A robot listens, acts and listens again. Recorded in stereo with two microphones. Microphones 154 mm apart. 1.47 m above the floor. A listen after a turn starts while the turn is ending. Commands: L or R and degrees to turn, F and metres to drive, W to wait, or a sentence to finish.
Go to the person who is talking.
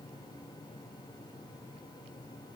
W
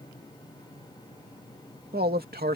R90
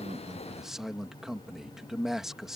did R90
F1.0
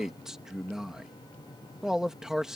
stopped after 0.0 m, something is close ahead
Something is in my way. I am facing the man speaking but have not reached it.